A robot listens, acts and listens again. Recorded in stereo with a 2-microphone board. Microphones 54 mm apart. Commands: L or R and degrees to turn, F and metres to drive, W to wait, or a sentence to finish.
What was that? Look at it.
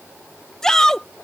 L30
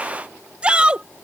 R20
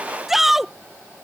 Facing the shout.